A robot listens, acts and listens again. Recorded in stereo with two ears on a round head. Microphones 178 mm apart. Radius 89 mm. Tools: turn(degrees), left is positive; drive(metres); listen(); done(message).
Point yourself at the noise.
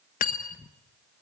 turn(degrees=40)
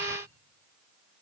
listen()
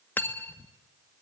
turn(degrees=10)
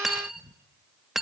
done("Found it: cutlery clinking, straight ahead, 1 to 2 m away.")